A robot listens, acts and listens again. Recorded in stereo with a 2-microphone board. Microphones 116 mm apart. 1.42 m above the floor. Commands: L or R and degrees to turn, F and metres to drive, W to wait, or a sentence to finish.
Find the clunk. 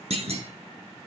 R60
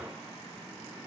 W
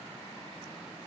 I heard a clunk, but can't make it out now. It was about straight ahead or 60° right.